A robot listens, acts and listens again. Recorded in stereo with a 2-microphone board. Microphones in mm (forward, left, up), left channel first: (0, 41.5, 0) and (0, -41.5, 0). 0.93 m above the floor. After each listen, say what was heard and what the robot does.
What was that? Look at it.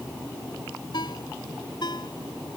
The ringtone: about 60° left or 120° left. Turn 60° left.
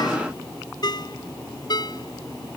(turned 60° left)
So it is at 60° left. Turn 60° left.
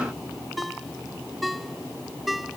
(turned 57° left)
Facing the ringtone.